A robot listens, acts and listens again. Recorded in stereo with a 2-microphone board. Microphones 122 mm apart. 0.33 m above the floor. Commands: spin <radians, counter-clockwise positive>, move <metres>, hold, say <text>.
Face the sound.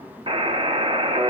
spin -0.79
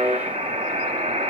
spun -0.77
spin -1.48
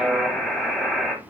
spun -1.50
say Facing the buzzer.